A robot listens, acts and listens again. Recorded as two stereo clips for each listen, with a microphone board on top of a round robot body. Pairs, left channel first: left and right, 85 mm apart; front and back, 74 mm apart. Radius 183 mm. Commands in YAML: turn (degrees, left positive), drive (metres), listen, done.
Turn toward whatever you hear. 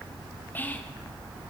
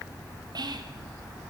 turn: 160
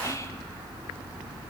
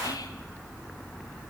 listen: true
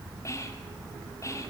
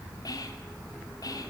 turn: 35
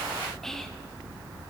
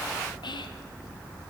done: "Facing the whispering, 1 to 2 m away."